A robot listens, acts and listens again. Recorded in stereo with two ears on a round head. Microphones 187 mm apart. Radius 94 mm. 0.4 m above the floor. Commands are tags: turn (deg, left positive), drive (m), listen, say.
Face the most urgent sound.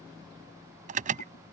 <turn deg="-35"/>
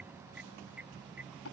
<listen/>
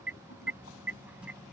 <say>Found it: an alarm, straight ahead.</say>